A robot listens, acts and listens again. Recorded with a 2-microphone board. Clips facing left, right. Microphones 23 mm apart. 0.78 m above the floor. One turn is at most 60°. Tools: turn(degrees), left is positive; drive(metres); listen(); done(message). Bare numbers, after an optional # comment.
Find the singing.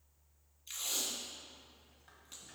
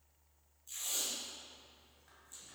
listen()
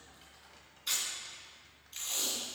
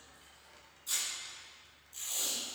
listen()
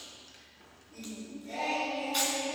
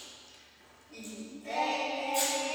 turn(-60)
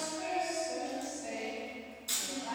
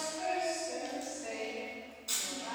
# So it is at 35° right.
turn(-35)
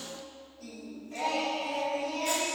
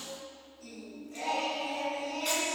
# The singing is now 20° left.
turn(20)
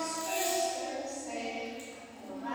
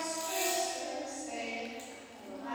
done("Found it: singing, straight ahead.")